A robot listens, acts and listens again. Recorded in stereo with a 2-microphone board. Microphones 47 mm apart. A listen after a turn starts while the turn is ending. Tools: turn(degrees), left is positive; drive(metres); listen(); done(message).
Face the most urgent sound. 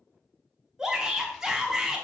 turn(degrees=-30)
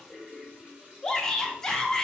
turn(degrees=15)
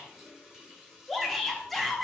done("Found it: a shout, straight ahead.")